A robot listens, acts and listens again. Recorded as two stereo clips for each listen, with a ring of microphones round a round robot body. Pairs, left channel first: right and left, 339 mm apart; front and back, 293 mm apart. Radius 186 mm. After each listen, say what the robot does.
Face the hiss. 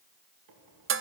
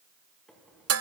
Keep listening.
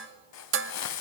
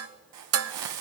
Turn 135° right.
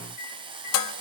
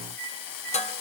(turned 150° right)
Turn 15° left.
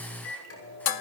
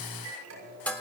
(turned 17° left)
Keep listening.
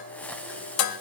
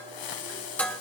Found it: a hiss, straight ahead.